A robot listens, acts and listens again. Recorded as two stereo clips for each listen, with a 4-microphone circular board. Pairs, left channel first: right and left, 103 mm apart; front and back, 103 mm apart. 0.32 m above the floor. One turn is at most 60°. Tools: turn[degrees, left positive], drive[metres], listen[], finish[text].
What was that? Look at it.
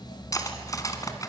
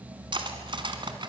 Thought: The cutlery clinking: 145° right.
Action: turn[-60]
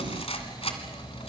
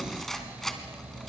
Thought: The cutlery clinking is now 85° right.
Action: turn[-60]
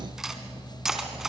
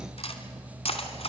Action: finish[Found it: cutlery clinking, straight ahead.]